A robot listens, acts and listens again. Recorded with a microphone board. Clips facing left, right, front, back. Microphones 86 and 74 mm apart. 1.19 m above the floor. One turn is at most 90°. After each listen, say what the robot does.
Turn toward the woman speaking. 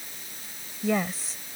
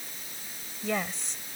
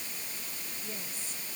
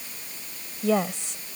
Turn 90° left.
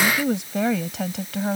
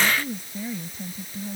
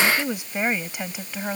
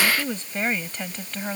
Turn 80° left.
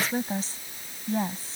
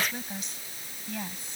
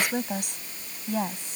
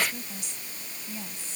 Turn 30° left.
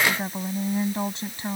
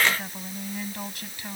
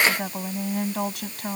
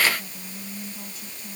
Turn 25° left.
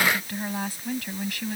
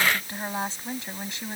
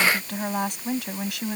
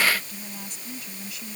Turn 25° right.
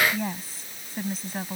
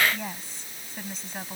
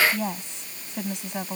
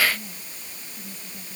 Facing the woman speaking.